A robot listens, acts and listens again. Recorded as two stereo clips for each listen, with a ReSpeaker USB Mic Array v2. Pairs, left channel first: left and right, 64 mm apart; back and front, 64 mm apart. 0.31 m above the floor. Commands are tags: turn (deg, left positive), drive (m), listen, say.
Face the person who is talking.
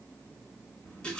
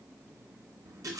<listen/>
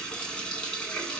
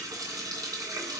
<listen/>
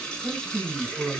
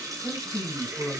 <turn deg="-155"/>
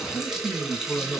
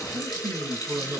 <turn deg="15"/>
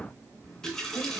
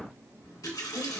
<listen/>
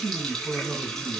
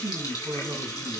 <say>Found it: a man speaking, straight ahead, 2 to 4 m away.</say>